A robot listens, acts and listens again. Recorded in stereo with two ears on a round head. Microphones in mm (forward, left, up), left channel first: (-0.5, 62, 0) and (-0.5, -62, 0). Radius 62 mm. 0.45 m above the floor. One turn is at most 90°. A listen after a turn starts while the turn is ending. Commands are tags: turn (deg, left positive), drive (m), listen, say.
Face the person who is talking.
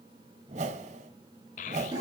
<turn deg="55"/>
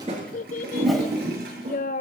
<turn deg="65"/>
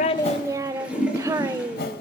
<turn deg="-25"/>
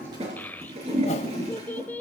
<turn deg="15"/>
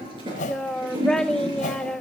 <say>Facing the child speaking, under 1 m away.</say>